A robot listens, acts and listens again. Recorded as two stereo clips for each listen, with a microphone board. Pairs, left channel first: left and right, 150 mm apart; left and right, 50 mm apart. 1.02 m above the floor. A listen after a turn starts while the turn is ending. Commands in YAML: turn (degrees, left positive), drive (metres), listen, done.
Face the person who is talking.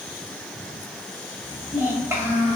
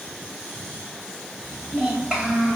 turn: -15
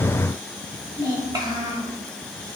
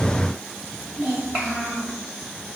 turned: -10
turn: -155
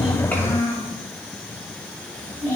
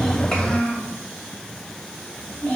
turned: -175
turn: 20
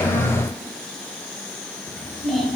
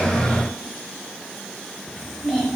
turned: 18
done: "Found it: a child speaking, straight ahead."